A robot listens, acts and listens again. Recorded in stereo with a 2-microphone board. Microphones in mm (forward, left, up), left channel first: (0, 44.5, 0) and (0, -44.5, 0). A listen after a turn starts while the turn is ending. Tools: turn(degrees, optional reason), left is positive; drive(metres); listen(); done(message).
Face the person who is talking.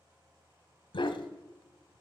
listen()
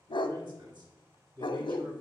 turn(degrees=-60, reason="The man speaking: about 60° right or 120° right.")
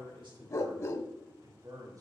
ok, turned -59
turn(degrees=-45, reason="So it is at 45° right.")
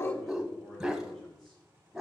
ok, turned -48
listen()
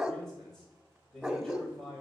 done("Facing the man speaking.")